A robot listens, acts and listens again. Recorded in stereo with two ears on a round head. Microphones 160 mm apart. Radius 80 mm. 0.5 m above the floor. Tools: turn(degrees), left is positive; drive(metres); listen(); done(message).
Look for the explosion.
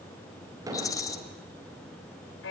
turn(degrees=-20)
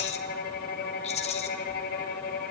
listen()
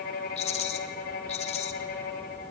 done("I heard an explosion, but can't make it out now. It was about straight ahead or 140° right.")